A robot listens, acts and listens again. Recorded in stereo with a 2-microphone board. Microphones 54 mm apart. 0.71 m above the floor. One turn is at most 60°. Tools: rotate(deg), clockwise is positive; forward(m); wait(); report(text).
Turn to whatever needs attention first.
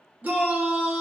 rotate(35)
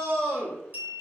rotate(60)
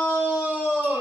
rotate(35)
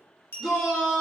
report("Found it: a shout, straight ahead.")